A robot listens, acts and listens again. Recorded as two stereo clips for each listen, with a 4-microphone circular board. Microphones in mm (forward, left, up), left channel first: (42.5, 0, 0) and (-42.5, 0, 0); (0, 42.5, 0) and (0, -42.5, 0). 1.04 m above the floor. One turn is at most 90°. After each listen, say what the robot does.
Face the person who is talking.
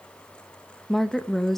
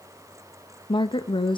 Turn 85° left.
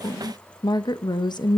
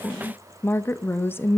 Turn 30° left.
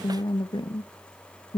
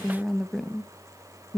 Found it: a woman speaking, straight ahead, under 1 m away.